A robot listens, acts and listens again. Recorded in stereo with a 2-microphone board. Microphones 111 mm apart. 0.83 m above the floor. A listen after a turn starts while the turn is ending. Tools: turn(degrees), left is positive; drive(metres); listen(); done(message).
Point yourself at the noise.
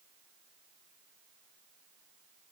listen()
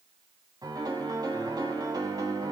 turn(degrees=-35)
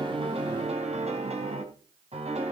turn(degrees=-110)
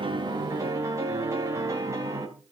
turn(degrees=-25)
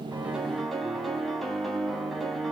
done("Found it: a piano, straight ahead, 2 to 4 m away.")